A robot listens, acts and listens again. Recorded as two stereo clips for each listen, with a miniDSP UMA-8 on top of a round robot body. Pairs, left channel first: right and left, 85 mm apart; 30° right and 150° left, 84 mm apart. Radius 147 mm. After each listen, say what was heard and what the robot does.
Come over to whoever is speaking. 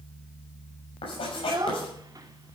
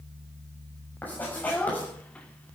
The child speaking: 45° left. Turn 45° left.
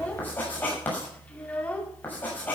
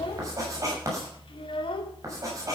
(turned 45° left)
The child speaking is now 15° right. Turn 15° right.
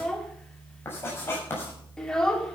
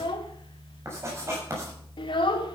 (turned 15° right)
Drive 1.0 m forward.
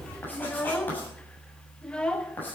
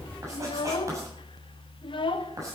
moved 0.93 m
The child speaking is now 10° right. Turn 10° right.
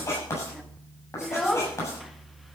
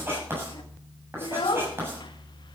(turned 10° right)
Drive 1.0 m forward.
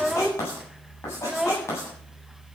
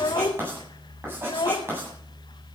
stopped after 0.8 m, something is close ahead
Arrived at the child speaking, straight ahead.